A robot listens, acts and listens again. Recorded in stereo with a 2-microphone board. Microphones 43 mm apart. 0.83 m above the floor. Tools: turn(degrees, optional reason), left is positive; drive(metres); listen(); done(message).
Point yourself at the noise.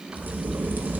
turn(degrees=-45, reason="The crack: about 45° right or 135° right.")
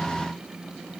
listen()
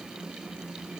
done("I heard a crack, but can't make it out now. It was about straight ahead or 90° right.")